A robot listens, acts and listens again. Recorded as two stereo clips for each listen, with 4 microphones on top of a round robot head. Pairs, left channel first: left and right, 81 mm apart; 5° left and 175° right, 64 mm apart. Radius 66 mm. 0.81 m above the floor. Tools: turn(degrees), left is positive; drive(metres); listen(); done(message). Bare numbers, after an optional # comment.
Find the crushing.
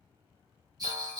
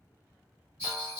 listen()
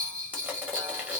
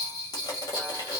# The crushing: 15° right.
turn(-15)
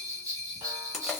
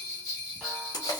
done("Found it: crushing, straight ahead, 1 to 2 m away.")